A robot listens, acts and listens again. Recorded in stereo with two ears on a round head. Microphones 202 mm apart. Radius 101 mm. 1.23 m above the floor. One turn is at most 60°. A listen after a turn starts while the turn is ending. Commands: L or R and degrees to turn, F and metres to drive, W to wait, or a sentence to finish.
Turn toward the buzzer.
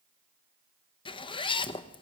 W
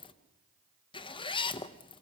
W
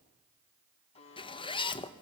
L25
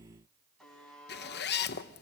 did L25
Facing the buzzer, over 4 m away.